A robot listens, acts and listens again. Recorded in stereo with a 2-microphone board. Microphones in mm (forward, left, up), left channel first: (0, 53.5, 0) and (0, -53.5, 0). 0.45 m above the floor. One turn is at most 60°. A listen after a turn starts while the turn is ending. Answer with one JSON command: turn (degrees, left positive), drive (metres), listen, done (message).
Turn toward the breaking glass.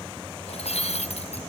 {"turn": 60}
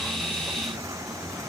{"listen": true}
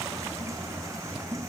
{"done": "I heard breaking glass, but can't make it out now. It was about 15° left or 45° left."}